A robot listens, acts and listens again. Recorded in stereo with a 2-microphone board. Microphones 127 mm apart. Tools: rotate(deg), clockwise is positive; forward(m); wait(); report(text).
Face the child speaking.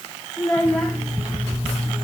rotate(-30)
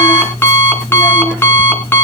wait()
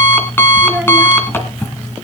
wait()
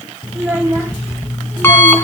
rotate(20)
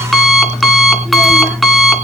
wait()
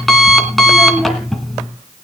wait()
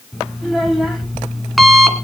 report("Found it: a child speaking, straight ahead.")